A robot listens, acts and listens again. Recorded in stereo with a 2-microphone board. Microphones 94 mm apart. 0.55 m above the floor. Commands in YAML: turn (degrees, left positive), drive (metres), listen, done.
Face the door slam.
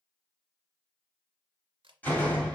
turn: 20
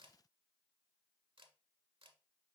listen: true
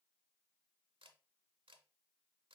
done: "I heard a door slam, but can't make it out now. It was about straight ahead or 140° left."